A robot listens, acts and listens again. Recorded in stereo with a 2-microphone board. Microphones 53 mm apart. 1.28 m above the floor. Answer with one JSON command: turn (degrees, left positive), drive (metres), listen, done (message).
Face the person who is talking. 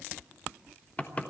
{"listen": true}
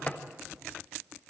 {"listen": true}
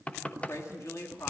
{"turn": 70}
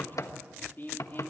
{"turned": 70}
{"turn": 40}
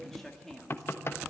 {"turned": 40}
{"done": "Facing the woman speaking, 2 to 4 m away."}